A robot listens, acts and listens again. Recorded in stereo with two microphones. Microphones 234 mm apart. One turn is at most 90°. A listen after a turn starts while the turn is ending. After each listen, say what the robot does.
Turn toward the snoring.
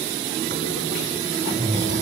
Turn 50° right.
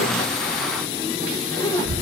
Turn 75° right.
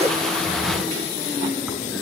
Keep listening.
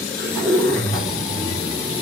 Found it: snoring, straight ahead, over 4 m away.